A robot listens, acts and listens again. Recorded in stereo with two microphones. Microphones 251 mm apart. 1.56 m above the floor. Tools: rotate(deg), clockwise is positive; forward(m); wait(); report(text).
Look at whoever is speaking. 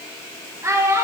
rotate(30)
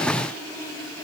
wait()
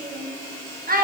rotate(140)
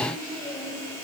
wait()
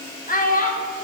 rotate(-40)
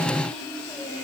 wait()
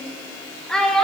report("Facing the child speaking, 1 to 2 m away.")